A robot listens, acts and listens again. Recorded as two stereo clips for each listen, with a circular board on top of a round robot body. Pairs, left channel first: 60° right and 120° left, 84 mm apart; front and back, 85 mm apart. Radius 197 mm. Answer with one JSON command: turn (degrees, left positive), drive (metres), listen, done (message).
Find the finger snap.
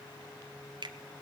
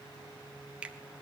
{"turn": 105}
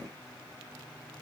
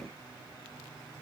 {"listen": true}
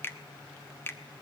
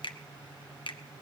{"done": "Found it: a finger snap, straight ahead, 1 to 2 m away."}